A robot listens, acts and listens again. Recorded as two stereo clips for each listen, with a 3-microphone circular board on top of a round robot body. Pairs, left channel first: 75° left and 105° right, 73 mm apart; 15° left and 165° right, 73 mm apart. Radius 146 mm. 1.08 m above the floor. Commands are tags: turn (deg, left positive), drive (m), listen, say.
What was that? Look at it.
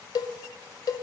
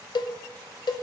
<turn deg="40"/>
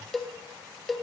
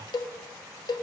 <turn deg="-15"/>
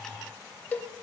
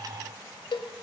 <say>Found it: a cowbell, straight ahead.</say>